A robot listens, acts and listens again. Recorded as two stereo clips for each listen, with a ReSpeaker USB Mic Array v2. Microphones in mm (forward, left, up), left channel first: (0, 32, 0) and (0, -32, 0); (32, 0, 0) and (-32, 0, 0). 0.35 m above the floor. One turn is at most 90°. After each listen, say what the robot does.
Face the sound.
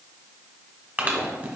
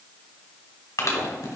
Turn 30° right.
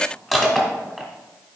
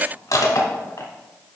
Found it: crushing, straight ahead, 1 to 2 m away.